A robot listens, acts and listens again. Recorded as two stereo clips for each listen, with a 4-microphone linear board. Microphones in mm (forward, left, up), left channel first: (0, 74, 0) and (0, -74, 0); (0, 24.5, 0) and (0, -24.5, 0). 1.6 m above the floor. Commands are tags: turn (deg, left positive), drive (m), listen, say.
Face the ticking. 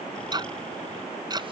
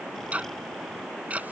<turn deg="-30"/>
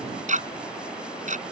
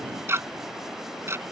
<turn deg="-120"/>
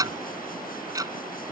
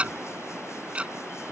<turn deg="-25"/>
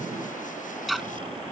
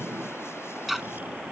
<say>Facing the ticking.</say>